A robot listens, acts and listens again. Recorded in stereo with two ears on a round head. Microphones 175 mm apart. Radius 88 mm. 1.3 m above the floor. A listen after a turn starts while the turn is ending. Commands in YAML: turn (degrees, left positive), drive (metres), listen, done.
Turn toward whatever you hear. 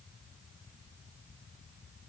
listen: true
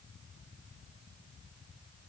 listen: true
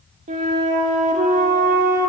turn: -40
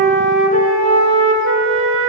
turn: -95
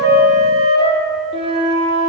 turn: -30
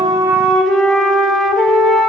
done: "Found it: a flute, straight ahead, 1 to 2 m away."